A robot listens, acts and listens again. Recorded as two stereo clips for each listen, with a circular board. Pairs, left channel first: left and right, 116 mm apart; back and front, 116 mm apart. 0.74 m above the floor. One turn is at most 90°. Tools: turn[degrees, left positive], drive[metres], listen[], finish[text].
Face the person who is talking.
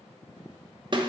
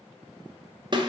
Action: listen[]
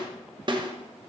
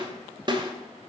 Action: listen[]
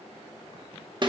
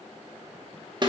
Action: finish[I can't make out anyone speaking, only a snare drum.]